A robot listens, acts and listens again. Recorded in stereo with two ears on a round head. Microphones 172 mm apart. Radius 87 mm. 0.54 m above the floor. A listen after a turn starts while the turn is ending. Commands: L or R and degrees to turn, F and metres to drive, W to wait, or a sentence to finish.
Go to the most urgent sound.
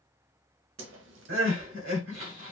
R90
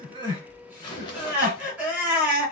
R10
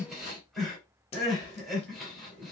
F1.0
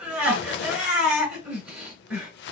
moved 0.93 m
F1.0
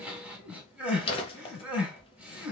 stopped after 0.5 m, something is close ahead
Arrived at the crying, straight ahead.